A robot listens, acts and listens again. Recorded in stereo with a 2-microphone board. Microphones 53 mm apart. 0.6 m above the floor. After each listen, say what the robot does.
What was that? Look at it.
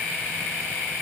Keep listening.
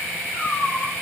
Turn 45° left.
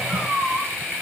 Turn 85° left.
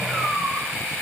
Facing the cat meowing, over 4 m away.